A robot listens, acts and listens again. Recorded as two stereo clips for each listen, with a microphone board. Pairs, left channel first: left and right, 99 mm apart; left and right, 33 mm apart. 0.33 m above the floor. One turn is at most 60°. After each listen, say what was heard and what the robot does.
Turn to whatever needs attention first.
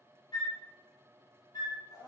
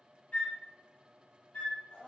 Keep listening.
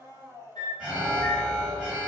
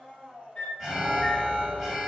Turn 30° right.
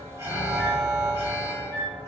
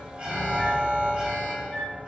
So it is at 140° right. Turn 60° right.
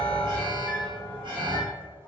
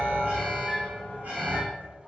The alarm is now 100° right. Turn 60° right.
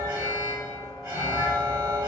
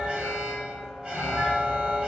The alarm is now 35° right. Turn 35° right.
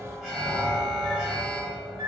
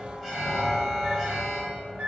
Found it: an alarm, straight ahead, 1 to 2 m away.